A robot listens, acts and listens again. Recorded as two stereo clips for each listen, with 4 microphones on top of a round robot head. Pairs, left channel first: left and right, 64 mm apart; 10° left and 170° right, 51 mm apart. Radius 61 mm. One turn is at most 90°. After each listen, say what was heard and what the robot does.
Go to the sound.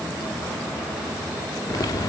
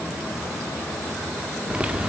The typing on a keyboard: 125° left. Turn 90° left.
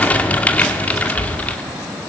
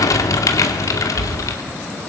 The typing on a keyboard is now 20° left. Turn 20° left.
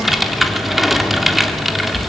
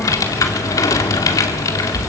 Drive 1.0 m forward.
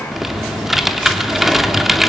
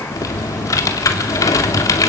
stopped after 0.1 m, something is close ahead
Something is in my way. I am facing the typing on a keyboard but have not reached it.